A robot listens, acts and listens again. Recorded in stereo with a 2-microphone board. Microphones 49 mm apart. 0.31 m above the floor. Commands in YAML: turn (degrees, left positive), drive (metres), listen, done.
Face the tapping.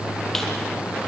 listen: true
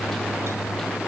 listen: true
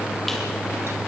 done: "I can't make out tapping to turn to."